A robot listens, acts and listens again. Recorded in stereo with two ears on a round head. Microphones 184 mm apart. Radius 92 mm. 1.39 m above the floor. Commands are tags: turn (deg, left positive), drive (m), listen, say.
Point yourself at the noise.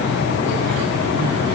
<listen/>
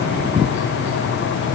<listen/>
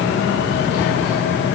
<say>I can't make out anything.</say>